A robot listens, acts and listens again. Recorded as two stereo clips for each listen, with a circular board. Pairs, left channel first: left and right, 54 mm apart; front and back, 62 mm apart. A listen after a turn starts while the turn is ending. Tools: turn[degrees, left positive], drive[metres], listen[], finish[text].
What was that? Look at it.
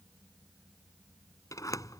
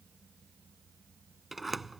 Thought: The sliding door: 95° left.
Action: turn[95]
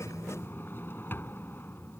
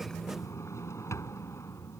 Thought: The sliding door is now 40° left.
Action: turn[40]
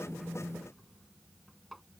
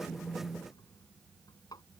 Action: finish[Facing the sliding door.]